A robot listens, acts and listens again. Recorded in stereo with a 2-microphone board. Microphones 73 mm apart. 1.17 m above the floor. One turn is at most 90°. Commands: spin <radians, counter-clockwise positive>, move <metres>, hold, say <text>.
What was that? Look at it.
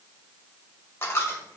spin 0.61
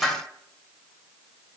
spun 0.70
say Found it: a dropped coin, straight ahead.